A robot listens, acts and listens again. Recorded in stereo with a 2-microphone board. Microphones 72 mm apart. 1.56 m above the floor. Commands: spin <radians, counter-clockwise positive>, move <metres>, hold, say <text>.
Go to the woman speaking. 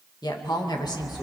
spin 1.57
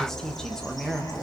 move 1.0
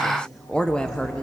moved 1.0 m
spin 0.17
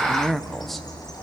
move 1.0
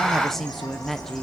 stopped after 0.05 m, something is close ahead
say I am next to the woman speaking.